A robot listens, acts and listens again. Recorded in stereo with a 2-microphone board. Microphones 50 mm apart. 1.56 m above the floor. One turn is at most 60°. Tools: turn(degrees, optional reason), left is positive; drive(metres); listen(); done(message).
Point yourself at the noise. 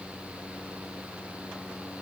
listen()
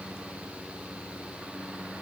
listen()
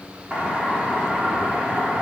turn(degrees=-30, reason="The doorbell: about 30° right or 150° right.")
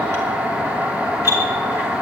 turn(degrees=-60, reason="So it is at 120° right.")
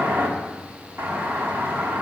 turn(degrees=-45, reason="The doorbell is now 45° right.")
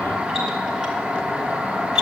turn(degrees=-15, reason="The doorbell is now 15° right.")
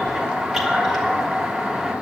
done("Facing the doorbell.")